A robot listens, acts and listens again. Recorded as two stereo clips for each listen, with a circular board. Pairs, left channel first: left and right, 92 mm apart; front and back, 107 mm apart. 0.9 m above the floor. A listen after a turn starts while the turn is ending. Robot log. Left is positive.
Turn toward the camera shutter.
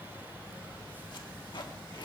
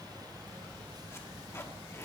cmd idle
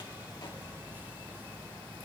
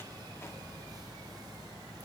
cmd idle
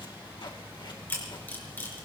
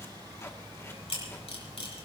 note: The camera shutter: 20° left.
cmd yaw +20
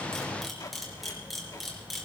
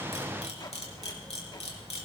end: Found it: a camera shutter, straight ahead, over 4 m away.